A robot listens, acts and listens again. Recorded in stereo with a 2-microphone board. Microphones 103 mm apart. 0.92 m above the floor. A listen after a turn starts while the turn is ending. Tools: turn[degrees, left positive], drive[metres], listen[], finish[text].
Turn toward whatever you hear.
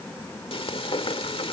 Thought: The frying: about 65° left or 115° left.
Action: turn[65]
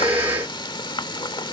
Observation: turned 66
Thought: So it is at 50° left.
Action: turn[50]
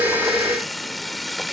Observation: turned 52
Action: finish[Found it: frying, straight ahead.]